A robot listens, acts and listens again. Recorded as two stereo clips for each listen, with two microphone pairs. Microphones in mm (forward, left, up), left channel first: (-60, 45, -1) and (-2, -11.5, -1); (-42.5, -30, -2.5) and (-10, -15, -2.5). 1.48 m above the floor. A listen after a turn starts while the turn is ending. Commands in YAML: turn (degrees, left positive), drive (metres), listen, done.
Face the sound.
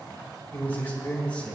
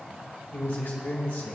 turn: -150
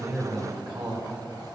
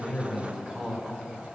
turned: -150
turn: -30
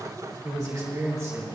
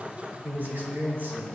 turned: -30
turn: 10
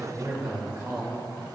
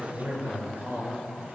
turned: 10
turn: 10
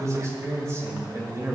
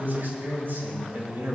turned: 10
turn: 10
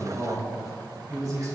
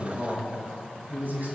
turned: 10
done: "Found it: a man speaking, straight ahead, 2 to 4 m away."